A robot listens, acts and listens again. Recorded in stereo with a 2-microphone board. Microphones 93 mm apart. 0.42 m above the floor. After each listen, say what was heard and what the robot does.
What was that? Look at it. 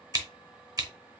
The scissors: about 45° right or 135° right. Turn 45° right.
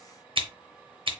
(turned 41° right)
So it is at 90° right. Turn 90° right.
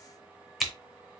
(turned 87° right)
Facing the scissors, under 1 m away.